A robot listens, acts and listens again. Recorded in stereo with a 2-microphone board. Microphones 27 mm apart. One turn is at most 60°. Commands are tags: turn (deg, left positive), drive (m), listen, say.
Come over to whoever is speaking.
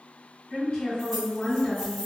<turn deg="40"/>
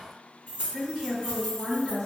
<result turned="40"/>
<drive m="1.0"/>
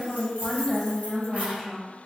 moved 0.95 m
<drive m="1.0"/>
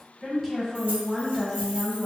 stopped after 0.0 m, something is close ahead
<say>Arrived at the woman speaking, straight ahead.</say>